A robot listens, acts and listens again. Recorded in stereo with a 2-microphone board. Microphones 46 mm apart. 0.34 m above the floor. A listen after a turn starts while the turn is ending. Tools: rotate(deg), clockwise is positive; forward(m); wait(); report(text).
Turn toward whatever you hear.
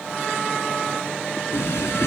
rotate(-90)
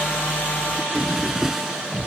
rotate(10)
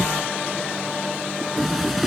report("Facing the drawer.")